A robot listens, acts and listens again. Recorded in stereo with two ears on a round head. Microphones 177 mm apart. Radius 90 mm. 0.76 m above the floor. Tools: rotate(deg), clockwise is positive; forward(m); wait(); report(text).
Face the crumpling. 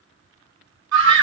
wait()
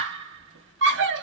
wait()
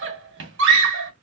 report("I can't make out crumpling, only a scream.")